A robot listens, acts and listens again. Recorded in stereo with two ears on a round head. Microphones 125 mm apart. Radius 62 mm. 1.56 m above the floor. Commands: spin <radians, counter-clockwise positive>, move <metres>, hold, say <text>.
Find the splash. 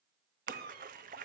spin -1.05
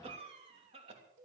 hold
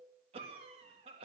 say I heard a splash, but can't make it out now. It was about straight ahead or 60° right.